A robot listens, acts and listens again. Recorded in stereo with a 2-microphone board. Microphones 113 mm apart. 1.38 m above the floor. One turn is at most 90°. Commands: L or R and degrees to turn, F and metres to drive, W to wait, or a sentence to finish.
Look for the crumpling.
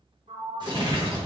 R40
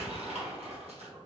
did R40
R90
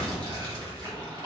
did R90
R45
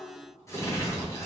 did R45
L30
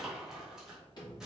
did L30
Found it: crumpling, straight ahead.